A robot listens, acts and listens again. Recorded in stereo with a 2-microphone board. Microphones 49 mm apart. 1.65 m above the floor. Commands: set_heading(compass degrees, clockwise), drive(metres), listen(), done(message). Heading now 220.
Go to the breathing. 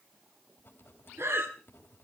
set_heading(280)
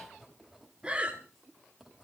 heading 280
set_heading(310)
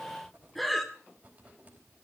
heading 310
drive(1.0)
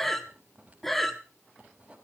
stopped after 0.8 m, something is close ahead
done("I am next to the breathing.")